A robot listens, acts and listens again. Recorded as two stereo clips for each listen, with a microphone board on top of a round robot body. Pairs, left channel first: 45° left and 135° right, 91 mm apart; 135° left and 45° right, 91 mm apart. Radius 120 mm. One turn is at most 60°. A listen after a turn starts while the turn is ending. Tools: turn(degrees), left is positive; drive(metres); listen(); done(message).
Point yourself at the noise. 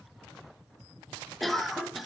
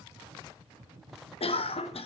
turn(degrees=60)
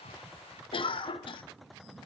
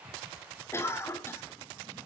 turn(degrees=60)
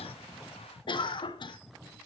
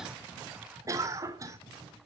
turn(degrees=10)
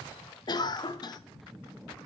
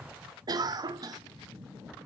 done("Found it: a cough, straight ahead.")